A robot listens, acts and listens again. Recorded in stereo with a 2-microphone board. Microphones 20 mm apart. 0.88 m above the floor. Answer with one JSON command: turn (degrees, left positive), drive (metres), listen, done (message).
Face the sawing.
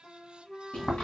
{"listen": true}
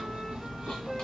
{"listen": true}
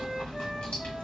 {"done": "I can't make out sawing, only chewing and a flute."}